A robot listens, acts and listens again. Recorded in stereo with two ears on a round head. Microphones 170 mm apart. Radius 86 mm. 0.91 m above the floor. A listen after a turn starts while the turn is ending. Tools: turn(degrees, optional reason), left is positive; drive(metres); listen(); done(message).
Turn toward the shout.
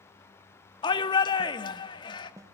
turn(degrees=25, reason="The shout: about 25° left or 155° left.")
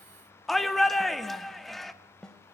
done("Found it: a shout, straight ahead.")